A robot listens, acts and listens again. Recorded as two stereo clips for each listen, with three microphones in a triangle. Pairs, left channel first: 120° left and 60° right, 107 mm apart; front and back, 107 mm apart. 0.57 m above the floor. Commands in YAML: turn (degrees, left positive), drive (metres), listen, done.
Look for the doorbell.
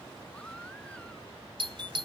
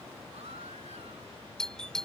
turn: -80
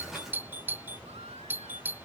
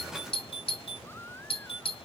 turn: 10
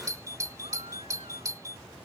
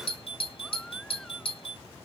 done: "Found it: a doorbell, straight ahead."